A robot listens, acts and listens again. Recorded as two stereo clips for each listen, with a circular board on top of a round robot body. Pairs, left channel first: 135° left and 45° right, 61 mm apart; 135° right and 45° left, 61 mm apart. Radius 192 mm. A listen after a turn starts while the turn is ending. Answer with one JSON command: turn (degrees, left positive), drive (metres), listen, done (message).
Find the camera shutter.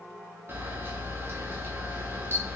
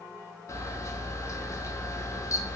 {"turn": -100}
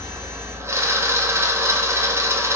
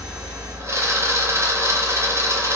{"done": "Found it: a camera shutter, straight ahead."}